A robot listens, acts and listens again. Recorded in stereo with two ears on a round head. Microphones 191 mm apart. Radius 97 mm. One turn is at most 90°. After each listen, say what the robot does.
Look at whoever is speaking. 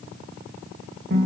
Keep listening.
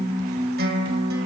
Keep listening.
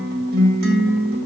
I can't make out anyone speaking, only a guitar.